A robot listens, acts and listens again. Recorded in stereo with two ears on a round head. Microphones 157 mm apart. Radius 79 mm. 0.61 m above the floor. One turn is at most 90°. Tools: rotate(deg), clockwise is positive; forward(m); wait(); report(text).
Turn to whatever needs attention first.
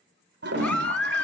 rotate(-30)
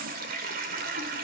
wait()
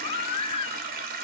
rotate(-90)
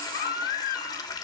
rotate(-55)
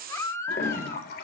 rotate(-15)
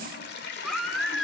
report("Found it: a baby crying, straight ahead, 1 to 2 m away.")